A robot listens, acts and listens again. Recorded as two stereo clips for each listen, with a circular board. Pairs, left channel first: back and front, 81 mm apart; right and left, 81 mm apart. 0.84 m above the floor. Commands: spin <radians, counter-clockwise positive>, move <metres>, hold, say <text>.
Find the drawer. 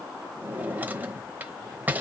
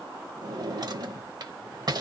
spin 1.13
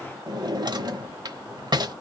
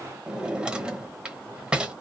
spin 0.17
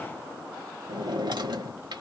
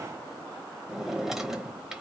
say Found it: a drawer, straight ahead, 1 to 2 m away.